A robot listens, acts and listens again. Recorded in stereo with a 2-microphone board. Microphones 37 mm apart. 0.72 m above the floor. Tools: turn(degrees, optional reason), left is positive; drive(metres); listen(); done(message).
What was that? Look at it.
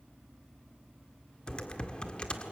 turn(degrees=25, reason="The typing on a keyboard: about 25° left or 155° left.")
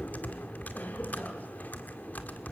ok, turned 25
turn(degrees=125, reason="So it is at 125° left.")
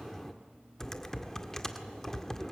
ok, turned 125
turn(degrees=15, reason="The typing on a keyboard is now 15° left.")
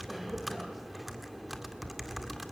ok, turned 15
done("Found it: typing on a keyboard, straight ahead, 1 to 2 m away.")